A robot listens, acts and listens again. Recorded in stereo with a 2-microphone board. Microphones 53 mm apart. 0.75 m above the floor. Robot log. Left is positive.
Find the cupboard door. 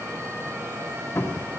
note: The cupboard door: about 65° left or 115° left.
cmd yaw +65
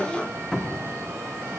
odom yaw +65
note: So it is at 10° left.
cmd yaw +10
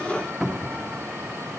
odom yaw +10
end: Facing the cupboard door.